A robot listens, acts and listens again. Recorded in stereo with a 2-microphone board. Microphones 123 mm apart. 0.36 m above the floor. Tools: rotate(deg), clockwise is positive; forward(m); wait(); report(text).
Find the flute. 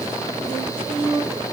rotate(20)
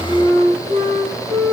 rotate(140)
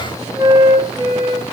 rotate(25)
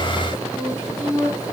report("Found it: a flute, straight ahead, over 4 m away.")